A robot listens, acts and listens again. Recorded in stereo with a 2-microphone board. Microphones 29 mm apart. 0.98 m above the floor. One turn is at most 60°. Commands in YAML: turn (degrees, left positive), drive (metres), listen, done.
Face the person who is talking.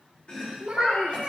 turn: -35
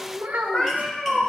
turn: -60
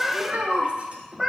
turn: -55
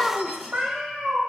done: "Facing the child speaking, 1 to 2 m away."